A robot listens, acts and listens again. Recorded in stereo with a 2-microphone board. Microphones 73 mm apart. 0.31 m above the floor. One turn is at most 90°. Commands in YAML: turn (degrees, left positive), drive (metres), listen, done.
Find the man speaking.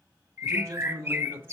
turn: -30
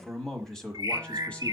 turn: 20
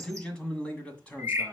turn: 20
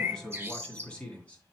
turn: 15
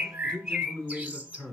done: "Found it: a man speaking, straight ahead, 2 to 4 m away."